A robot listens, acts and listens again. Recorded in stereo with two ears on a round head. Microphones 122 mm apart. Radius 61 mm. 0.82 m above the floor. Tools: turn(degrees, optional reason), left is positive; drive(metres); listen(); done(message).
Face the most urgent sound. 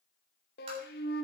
listen()
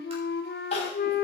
turn(degrees=50, reason="The crying: about 50° left or 130° left.")
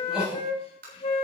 done("Facing the crying, 2 to 4 m away.")